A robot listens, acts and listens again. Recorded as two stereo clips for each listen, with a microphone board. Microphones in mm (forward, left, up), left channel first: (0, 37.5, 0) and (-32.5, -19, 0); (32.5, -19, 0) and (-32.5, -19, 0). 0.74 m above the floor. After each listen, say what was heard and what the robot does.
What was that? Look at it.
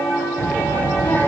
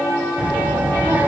The child speaking: 115° left. Turn 115° left.
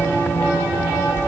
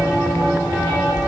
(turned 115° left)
The child speaking is now 10° left. Turn 10° left.
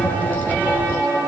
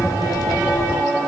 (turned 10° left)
Found it: a child speaking, straight ahead.